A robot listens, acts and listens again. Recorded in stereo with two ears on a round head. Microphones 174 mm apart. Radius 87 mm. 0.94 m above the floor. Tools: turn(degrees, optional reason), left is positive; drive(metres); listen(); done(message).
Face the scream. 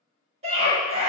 turn(degrees=-35, reason="The scream: about 35° right or 145° right.")
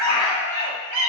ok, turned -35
turn(degrees=-110, reason="So it is at 110° right.")
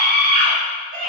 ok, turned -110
turn(degrees=-45, reason="The scream is now 45° right.")
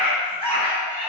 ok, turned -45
turn(degrees=10, reason="The scream is now 10° left.")
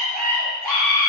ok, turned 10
done("Facing the scream.")